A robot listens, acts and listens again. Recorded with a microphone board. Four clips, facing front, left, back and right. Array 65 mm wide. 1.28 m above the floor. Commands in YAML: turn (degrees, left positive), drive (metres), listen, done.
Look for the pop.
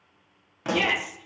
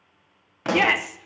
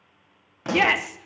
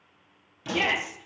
turn: 85
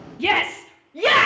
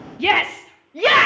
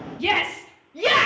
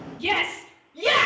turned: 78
done: "I heard a pop from this way, but can't make it out now."